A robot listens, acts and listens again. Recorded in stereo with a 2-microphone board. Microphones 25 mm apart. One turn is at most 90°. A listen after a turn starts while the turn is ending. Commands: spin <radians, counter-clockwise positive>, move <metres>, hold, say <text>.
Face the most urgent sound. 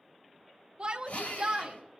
spin -0.70
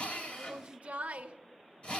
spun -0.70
spin -1.57
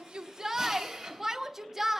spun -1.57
spin -0.26
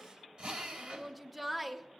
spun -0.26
say Found it: a shout, straight ahead, 1 to 2 m away.